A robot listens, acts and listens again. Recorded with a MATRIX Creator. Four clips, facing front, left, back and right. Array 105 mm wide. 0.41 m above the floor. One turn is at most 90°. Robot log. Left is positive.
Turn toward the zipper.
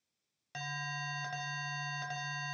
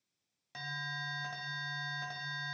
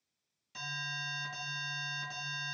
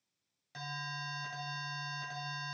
cmd idle
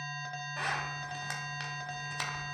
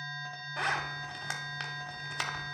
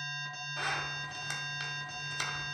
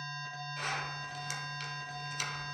note: The zipper: 65° left.
cmd yaw +65
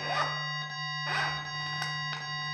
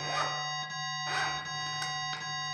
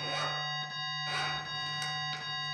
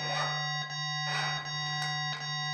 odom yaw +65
end: Found it: a zipper, straight ahead.